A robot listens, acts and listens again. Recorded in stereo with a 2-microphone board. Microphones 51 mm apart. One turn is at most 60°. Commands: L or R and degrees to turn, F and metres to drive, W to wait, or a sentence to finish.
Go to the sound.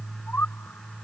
L45
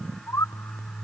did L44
L60
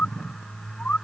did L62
L30
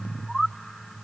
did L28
F1.0
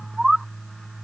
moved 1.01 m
F1.0
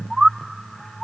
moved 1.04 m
R10
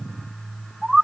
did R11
F1.0
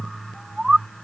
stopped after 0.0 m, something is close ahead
I am next to the bird.